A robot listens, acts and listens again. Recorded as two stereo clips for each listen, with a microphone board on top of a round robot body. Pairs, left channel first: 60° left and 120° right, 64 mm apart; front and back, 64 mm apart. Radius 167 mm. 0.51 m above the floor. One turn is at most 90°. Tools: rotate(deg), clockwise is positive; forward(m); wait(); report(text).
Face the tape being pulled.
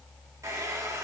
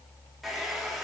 wait()
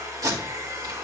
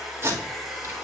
rotate(90)
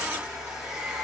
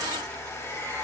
rotate(45)
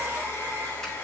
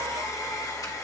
wait()
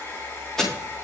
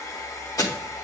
rotate(20)
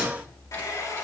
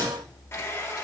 wait()
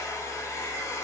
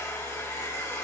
wait()
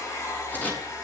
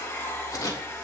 report("Found it: tape being pulled, straight ahead.")